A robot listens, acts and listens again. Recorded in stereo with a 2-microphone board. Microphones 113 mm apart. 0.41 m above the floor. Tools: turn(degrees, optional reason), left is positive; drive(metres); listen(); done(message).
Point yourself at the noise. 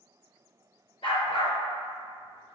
turn(degrees=55, reason="The dog barking: about 55° left or 125° left.")
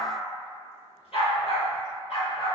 turn(degrees=55, reason="So it is at 55° left.")
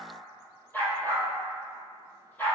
turn(degrees=15, reason="The dog barking is now 15° left.")
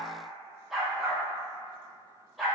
done("Facing the dog barking.")